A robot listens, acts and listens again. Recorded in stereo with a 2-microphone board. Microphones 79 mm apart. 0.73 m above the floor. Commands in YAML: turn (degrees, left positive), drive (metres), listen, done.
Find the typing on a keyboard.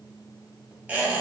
listen: true
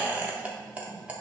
listen: true
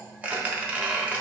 done: "I can't make out typing on a keyboard to turn to."